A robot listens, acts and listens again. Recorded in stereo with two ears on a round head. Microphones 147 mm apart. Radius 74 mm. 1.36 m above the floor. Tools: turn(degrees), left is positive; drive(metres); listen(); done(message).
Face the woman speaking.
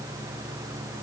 listen()
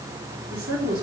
turn(degrees=-70)
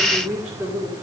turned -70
done("Facing the woman speaking, over 4 m away.")